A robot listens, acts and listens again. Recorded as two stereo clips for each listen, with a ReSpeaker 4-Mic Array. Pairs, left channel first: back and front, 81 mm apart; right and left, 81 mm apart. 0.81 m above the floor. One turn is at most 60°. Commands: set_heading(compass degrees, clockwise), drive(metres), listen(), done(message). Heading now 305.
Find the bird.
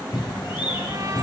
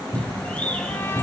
set_heading(5)
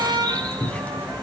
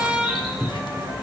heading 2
set_heading(62)
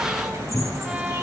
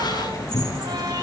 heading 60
set_heading(110)
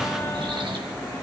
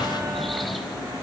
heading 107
done("Facing the bird, 2 to 4 m away.")